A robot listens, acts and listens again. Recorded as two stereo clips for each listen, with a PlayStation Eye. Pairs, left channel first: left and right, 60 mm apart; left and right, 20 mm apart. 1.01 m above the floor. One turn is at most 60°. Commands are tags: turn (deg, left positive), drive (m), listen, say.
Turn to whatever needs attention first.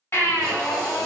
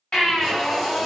<turn deg="45"/>
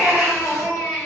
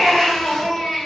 <say>Facing the baby crying, 1 to 2 m away.</say>